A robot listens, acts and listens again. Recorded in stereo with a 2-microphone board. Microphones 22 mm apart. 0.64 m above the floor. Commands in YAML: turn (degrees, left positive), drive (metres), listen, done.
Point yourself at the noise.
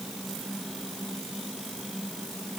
listen: true
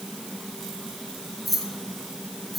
turn: -30
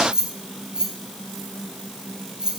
turn: -140
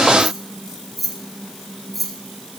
done: "Found it: keys jangling, straight ahead."